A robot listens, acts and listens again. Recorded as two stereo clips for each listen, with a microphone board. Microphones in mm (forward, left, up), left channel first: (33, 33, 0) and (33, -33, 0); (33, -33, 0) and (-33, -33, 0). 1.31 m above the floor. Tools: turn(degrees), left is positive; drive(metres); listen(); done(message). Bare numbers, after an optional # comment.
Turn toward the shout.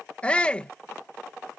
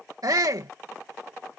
# The shout: 160° left.
turn(160)
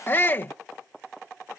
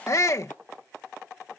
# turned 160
# The shout is now 35° left.
turn(35)
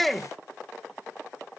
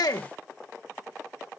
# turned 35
done("Facing the shout.")